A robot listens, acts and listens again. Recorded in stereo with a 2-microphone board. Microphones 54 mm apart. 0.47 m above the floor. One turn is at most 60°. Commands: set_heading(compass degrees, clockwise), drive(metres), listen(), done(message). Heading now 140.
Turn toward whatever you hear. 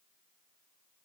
listen()
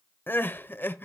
set_heading(95)
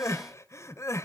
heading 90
set_heading(30)
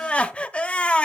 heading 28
set_heading(3)
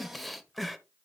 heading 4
done("Found it: crying, straight ahead, under 1 m away.")